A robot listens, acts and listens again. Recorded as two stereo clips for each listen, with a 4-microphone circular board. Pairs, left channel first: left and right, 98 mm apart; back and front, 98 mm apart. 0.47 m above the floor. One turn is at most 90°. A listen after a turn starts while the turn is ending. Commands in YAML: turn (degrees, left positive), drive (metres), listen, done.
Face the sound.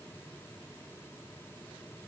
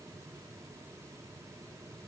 listen: true
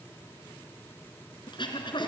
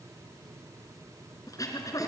turn: 90
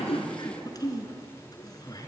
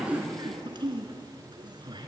turn: 40
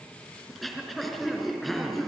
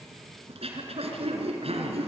done: "Found it: throat clearing, straight ahead."